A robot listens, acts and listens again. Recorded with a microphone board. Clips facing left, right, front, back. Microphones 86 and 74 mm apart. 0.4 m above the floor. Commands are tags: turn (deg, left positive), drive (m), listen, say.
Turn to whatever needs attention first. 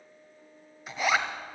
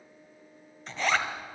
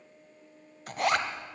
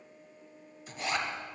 <listen/>
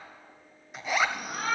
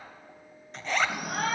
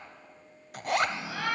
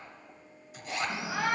<turn deg="-110"/>
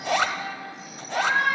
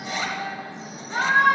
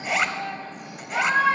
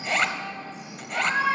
<turn deg="-35"/>
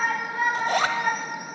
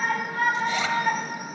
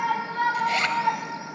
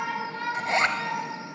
<say>Found it: a shout, straight ahead, 2 to 4 m away.</say>